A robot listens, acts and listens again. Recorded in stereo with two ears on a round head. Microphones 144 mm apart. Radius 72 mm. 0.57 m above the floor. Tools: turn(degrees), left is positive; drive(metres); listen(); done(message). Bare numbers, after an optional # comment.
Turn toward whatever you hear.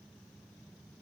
listen()
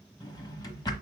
# The drawer: about 25° left or 155° left.
turn(25)
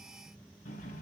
# So it is at 130° left.
turn(130)
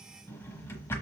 # The drawer is now 15° left.
turn(15)
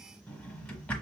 # The drawer is now 10° left.
turn(10)
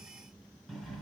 done("Found it: a drawer, straight ahead, 1 to 2 m away.")